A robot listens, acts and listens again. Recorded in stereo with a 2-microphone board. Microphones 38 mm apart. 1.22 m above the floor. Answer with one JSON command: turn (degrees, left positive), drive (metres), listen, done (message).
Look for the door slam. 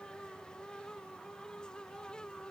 {"listen": true}
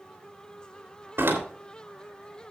{"turn": -90}
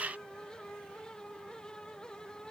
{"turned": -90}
{"done": "Facing where the door slam came from. I can't hear it now."}